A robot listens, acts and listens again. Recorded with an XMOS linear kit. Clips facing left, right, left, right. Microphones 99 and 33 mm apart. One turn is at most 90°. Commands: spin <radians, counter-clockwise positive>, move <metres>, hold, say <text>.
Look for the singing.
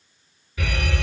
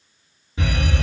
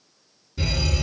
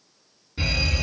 hold
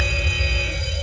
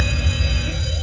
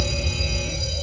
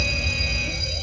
hold
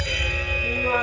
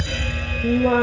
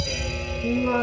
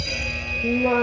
spin -1.05
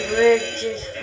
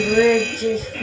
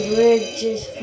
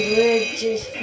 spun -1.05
say Facing the singing.